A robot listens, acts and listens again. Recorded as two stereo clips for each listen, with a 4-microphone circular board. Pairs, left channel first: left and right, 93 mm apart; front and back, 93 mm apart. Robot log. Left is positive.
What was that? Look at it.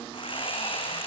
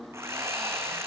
note: The sawing: 120° left.
cmd yaw +120
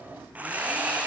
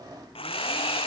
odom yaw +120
note: The sawing is now 15° right.
cmd yaw -15
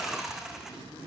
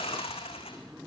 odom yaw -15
end: Found it: sawing, straight ahead.